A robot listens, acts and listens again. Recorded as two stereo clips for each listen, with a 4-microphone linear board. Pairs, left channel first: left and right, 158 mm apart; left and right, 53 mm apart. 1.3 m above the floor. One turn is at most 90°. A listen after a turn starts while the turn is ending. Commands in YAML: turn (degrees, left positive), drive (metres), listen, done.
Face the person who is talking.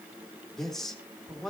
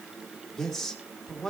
turn: 30
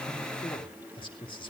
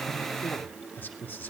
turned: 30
turn: 90
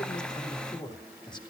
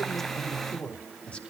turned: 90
turn: 25
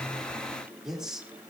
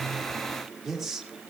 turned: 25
done: "Found it: a man speaking, straight ahead."